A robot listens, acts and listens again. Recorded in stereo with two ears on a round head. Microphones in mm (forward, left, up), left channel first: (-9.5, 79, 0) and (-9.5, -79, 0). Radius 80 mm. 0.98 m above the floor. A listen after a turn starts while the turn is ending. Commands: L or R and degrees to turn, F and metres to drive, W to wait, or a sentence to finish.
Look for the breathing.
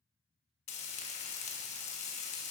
W
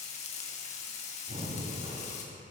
R40
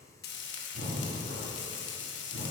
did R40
R100
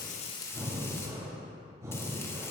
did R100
R15
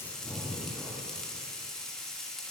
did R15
Facing the breathing.